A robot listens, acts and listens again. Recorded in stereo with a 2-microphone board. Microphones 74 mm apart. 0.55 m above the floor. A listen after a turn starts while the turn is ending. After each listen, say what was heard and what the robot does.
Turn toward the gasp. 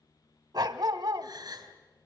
The gasp: about 70° right or 110° right. Turn 70° right.
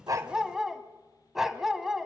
Keep listening.
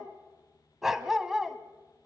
I heard a gasp, but can't make it out now. It was about straight ahead or 40° right.